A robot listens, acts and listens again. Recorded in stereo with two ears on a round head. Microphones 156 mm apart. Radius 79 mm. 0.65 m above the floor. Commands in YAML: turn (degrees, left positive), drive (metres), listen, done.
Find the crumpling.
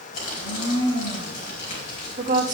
turn: 50
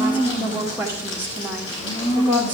turn: 80
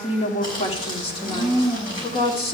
turn: 25
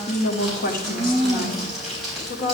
done: "Facing the crumpling."